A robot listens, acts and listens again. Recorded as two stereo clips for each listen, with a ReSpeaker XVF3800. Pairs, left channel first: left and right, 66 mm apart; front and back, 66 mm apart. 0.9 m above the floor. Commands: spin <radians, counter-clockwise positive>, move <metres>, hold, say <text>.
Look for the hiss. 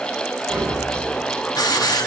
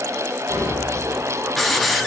spin 1.57
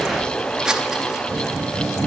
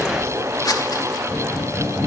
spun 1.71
spin -0.17
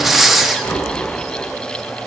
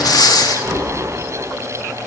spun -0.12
say Facing the hiss.